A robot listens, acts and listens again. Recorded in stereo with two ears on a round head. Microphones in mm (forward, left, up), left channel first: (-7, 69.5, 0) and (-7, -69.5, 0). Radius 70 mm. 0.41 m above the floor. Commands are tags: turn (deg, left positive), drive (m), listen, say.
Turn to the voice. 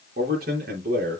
<turn deg="-65"/>
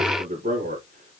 <turn deg="-50"/>
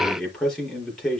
<say>Found it: a man speaking, straight ahead, over 4 m away.</say>